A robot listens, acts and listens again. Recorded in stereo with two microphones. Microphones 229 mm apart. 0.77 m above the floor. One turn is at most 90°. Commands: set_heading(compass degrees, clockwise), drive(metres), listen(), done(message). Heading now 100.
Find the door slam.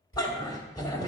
set_heading(40)
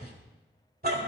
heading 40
listen()
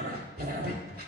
done("I heard a door slam, but can't make it out now. It was about straight ahead or 60° left.")